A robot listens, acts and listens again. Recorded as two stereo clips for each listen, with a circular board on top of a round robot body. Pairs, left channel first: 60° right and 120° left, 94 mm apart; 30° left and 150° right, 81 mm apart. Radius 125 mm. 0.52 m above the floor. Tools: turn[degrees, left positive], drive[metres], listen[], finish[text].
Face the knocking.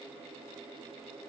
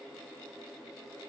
Action: listen[]
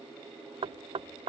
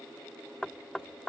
Thought: The knocking: 115° left.
Action: turn[115]
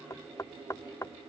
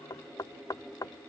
Thought: The knocking is now 10° right.
Action: turn[-10]
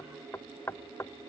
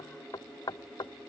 Action: finish[Found it: knocking, straight ahead.]